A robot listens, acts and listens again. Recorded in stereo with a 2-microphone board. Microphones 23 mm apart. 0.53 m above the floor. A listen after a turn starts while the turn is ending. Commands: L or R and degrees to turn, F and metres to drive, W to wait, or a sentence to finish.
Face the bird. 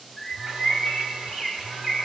L25
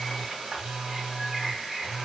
Found it: a bird, straight ahead, 1 to 2 m away.